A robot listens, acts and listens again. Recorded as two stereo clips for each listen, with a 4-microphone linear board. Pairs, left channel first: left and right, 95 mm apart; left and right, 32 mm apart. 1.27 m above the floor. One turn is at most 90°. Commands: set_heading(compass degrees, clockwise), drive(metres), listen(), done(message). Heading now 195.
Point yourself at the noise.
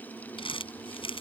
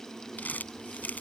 set_heading(125)
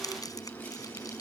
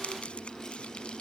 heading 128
listen()
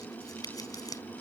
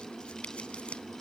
set_heading(88)
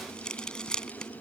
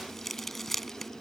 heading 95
set_heading(85)
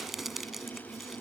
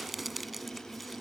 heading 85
done("Facing the crumpling.")